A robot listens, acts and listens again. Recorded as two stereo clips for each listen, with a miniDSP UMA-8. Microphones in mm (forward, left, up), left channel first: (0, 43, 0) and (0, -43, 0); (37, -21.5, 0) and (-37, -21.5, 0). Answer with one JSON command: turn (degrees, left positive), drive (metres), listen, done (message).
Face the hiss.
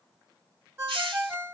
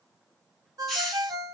{"turn": -85}
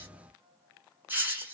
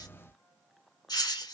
{"turn": -25}
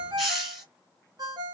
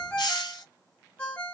{"done": "Facing the hiss."}